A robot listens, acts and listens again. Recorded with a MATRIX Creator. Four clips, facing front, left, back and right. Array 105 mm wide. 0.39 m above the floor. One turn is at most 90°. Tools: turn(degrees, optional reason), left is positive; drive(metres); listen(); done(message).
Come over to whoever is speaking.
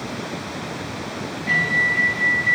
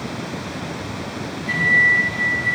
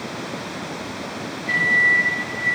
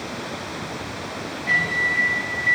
listen()
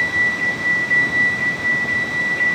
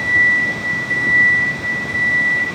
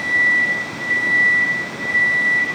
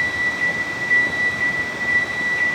listen()
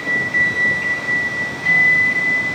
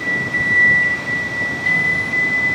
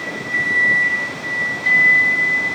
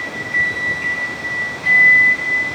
done("I can't make out anyone speaking, only a microwave.")